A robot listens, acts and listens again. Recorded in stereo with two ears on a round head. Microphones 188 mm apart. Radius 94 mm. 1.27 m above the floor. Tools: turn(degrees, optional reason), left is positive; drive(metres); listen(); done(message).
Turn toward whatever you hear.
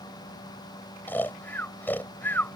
turn(degrees=30)
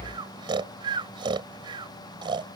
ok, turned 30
turn(degrees=-25, reason="So it is at 25° right.")
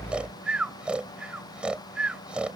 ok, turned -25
done("Facing the snoring.")